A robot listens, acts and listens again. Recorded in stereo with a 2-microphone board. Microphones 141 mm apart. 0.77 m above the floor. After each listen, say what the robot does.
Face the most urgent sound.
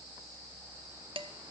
Keep listening.
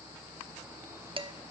Keep listening.
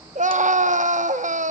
Turn 60° right.
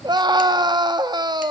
Turn 35° right.
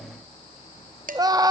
Turn 30° right.
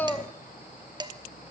Turn 15° left.
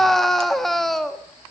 Facing the scream.